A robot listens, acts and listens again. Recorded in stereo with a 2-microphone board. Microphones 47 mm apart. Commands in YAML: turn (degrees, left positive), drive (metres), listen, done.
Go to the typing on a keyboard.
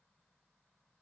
listen: true
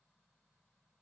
listen: true
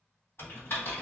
turn: 60
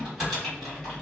drive: 1.0
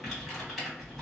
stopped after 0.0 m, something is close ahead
done: "Something is in my way. I am facing the typing on a keyboard but have not reached it."